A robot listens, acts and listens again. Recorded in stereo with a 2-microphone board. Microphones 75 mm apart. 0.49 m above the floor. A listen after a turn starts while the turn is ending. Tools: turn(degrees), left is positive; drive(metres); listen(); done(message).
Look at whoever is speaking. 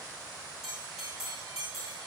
listen()
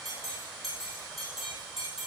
listen()
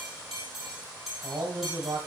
turn(degrees=-55)
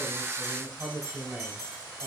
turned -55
done("Facing the man speaking.")